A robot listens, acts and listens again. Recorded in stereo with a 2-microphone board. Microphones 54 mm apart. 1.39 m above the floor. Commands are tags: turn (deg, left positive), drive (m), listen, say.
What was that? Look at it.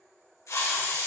<turn deg="70"/>
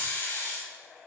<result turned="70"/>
<turn deg="35"/>
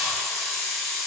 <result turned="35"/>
<say>Found it: a hiss, straight ahead.</say>